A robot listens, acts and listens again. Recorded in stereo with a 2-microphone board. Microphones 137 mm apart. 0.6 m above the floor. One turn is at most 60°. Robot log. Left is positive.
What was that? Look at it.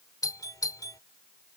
note: The doorbell: about 25° left or 155° left.
cmd yaw +25
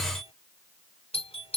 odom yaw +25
note: So it is at 125° left.
cmd yaw +60
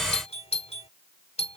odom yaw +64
note: The doorbell is now 60° left.
cmd yaw +60
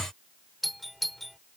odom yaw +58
end: Facing the doorbell.